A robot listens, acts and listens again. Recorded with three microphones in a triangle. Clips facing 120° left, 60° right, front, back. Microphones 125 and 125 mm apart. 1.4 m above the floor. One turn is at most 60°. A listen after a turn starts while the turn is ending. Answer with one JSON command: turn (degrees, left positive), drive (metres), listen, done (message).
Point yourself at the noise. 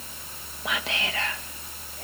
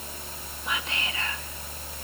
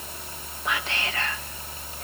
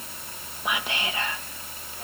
{"turn": 60}
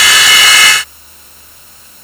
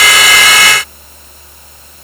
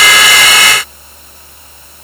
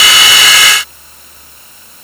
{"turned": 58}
{"turn": 45}
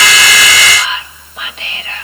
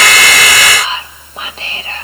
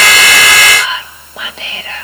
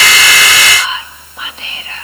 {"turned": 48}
{"done": "Facing the whispering."}